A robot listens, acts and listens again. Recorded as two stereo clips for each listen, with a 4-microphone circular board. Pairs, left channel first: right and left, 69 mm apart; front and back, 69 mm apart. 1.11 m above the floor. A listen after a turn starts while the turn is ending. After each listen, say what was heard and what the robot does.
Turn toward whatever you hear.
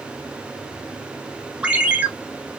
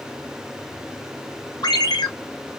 The ringtone: 20° left. Turn 20° left.
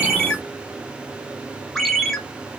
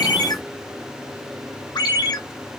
Found it: a ringtone, straight ahead.